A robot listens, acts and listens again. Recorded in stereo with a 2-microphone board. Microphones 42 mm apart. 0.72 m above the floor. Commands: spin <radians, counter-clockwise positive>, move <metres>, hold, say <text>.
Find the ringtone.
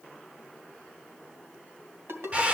spin -1.57
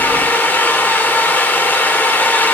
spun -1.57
hold
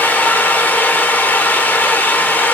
hold
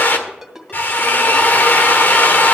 spin -0.17
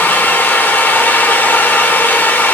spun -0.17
hold
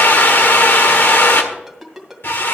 say Facing the ringtone.